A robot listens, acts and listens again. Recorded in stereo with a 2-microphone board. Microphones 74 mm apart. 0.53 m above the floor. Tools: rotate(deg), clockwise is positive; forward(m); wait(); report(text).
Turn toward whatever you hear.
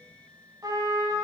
rotate(65)
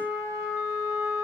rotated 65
rotate(50)
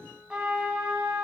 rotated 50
rotate(10)
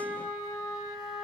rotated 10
report("Found it: a trumpet, straight ahead, 1 to 2 m away.")